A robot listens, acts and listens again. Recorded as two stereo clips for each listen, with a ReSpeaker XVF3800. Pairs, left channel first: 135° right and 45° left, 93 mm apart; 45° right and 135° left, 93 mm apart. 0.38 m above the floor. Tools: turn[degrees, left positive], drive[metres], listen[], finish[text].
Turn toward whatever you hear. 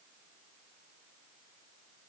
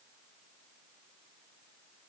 Action: listen[]
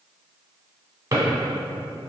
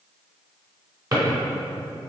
Thought: The drawer: 100° left.
Action: turn[100]
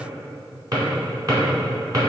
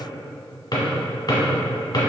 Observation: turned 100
Action: finish[Facing the drawer.]